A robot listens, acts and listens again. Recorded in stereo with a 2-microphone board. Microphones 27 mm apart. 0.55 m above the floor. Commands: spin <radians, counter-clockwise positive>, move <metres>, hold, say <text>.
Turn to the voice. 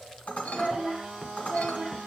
spin 0.52
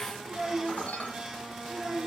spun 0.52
spin 0.52
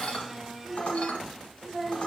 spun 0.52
spin 2.79
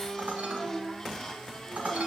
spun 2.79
say Facing the child speaking, 2 to 4 m away.